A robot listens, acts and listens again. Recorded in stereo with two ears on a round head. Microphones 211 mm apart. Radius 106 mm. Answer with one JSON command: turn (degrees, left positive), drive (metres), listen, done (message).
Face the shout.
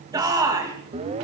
{"turn": -15}
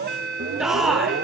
{"done": "Facing the shout."}